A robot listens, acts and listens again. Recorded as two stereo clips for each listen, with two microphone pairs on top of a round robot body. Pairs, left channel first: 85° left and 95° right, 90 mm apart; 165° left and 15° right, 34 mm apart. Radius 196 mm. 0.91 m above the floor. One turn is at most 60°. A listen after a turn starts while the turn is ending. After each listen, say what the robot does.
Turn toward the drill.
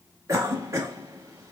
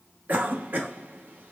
Keep listening.
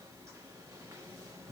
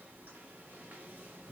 Keep listening.
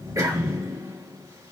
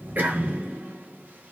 I can't make out a drill to turn to.